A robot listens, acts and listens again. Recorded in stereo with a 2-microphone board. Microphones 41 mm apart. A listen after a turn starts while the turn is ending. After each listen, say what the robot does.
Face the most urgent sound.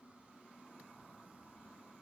Keep listening.
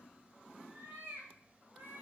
Keep listening.
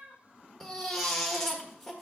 Turn 30° left.
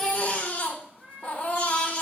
Turn 145° left.
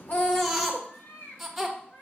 Found it: a baby crying, straight ahead.